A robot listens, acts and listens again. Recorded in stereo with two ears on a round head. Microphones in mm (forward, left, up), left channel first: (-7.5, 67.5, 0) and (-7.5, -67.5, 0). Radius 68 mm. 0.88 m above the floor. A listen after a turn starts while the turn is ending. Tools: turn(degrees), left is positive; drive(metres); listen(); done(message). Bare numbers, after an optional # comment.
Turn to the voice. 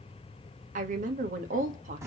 # The woman speaking: about 55° right or 125° right.
turn(-55)
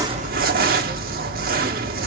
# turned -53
listen()
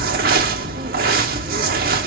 listen()
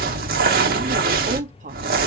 # So it is at 60° right.
turn(-60)
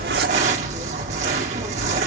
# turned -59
listen()
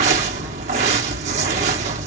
listen()
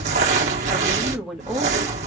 done("Found it: a woman speaking, straight ahead, 1 to 2 m away.")